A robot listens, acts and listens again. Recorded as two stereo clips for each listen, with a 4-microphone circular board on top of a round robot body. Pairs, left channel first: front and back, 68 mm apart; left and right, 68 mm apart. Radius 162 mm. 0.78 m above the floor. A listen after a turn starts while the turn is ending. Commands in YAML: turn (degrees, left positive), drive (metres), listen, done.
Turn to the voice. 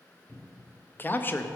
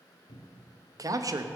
turn: -60
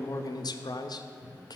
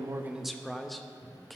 done: "Found it: a man speaking, straight ahead, 1 to 2 m away."